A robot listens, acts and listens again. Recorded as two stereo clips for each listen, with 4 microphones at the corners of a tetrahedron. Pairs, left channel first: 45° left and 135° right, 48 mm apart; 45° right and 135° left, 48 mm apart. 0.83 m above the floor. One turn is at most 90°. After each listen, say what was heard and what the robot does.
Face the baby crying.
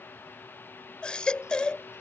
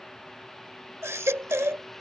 The baby crying: 115° left. Turn 90° left.
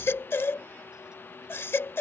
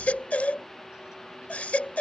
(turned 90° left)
The baby crying is now 15° left. Turn 15° left.
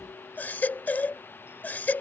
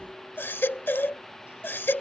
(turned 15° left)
Found it: a baby crying, straight ahead.